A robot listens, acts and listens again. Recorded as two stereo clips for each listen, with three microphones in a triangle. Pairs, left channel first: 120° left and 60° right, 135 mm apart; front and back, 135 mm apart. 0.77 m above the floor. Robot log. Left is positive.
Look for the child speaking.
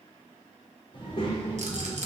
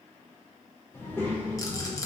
note: The child speaking: 85° left.
cmd yaw +85
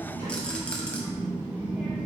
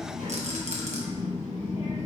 note: The child speaking is now 20° left.
cmd yaw +20
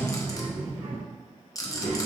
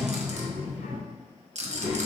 note: The child speaking is now 15° left.
cmd yaw +15
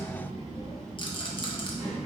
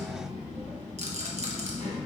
end: Facing the child speaking, 2 to 4 m away.